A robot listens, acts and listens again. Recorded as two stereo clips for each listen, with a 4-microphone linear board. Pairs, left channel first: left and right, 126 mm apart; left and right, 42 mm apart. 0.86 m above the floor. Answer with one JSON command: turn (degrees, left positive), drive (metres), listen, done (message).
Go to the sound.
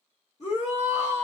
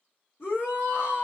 {"turn": 65}
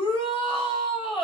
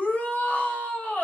{"turn": 45}
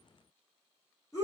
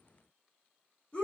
{"turn": 25}
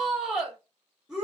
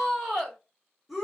{"drive": 1.0}
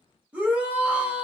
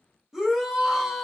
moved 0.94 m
{"turn": -15}
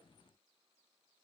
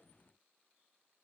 {"listen": true}
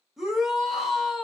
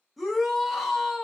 {"drive": 1.0}
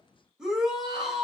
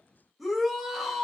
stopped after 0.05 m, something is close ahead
{"done": "I am next to the shout."}